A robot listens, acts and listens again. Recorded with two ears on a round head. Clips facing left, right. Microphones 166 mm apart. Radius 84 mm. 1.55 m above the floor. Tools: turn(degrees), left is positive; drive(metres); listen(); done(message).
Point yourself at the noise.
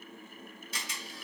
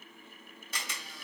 turn(degrees=-45)
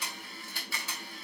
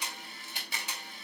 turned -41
turn(degrees=-20)
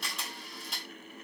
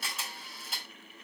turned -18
done("Facing the camera shutter.")